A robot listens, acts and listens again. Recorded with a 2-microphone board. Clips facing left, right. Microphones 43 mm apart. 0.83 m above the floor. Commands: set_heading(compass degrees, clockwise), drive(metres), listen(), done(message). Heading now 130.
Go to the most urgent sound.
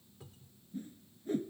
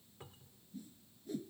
listen()
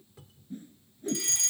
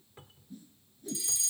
set_heading(70)
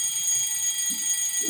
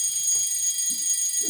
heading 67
set_heading(27)
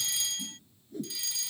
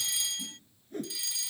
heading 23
drive(1.0)
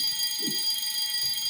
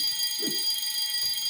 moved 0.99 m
drive(1.0)
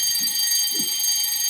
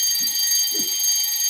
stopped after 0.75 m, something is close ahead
done("I am next to the fire alarm.")